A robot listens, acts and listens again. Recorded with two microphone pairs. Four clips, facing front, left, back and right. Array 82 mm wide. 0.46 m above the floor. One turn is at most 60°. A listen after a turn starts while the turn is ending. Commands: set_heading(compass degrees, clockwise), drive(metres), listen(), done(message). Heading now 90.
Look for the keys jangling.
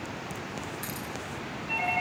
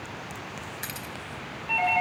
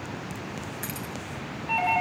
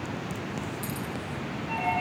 set_heading(30)
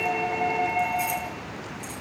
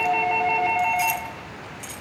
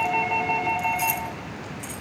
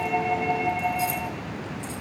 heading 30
set_heading(330)
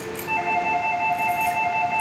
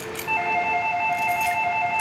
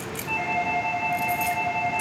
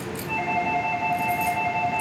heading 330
set_heading(285)
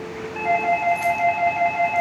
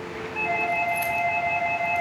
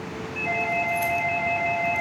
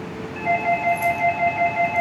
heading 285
listen()
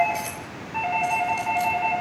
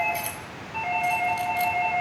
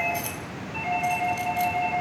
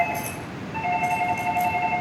set_heading(235)
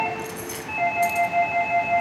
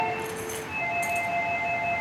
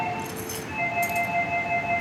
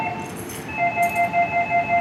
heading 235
listen()
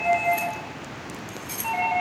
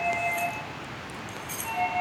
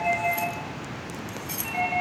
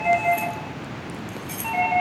set_heading(220)
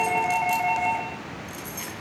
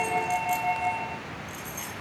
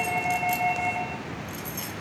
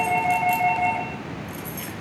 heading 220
done("Facing the keys jangling, 2 to 4 m away.")